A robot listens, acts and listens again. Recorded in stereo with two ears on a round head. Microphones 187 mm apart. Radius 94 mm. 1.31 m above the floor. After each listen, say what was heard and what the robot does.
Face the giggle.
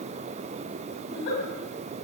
The giggle: about 70° left or 110° left. Turn 70° left.
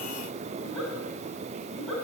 Facing the giggle, over 4 m away.